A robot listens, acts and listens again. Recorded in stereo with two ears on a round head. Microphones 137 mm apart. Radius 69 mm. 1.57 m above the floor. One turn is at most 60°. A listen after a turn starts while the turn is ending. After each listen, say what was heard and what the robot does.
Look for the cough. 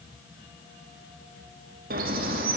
Keep listening.
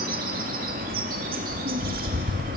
Keep listening.
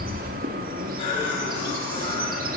The cough: about 40° left or 140° left. Turn 40° left.
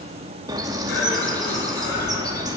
Keep listening.
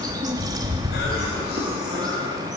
Keep listening.
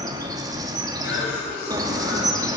So it is at 100° left. Turn 60° left.
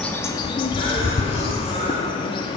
Nothing new. It was at 40° left. Turn 40° left.
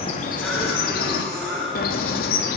Found it: a cough, straight ahead.